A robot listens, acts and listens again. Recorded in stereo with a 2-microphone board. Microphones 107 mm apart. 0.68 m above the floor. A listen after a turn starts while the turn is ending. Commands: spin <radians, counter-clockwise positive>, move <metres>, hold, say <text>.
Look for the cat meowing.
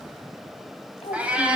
spin -0.52
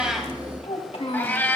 spin 0.35
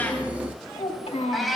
say Found it: a cat meowing, straight ahead, 1 to 2 m away.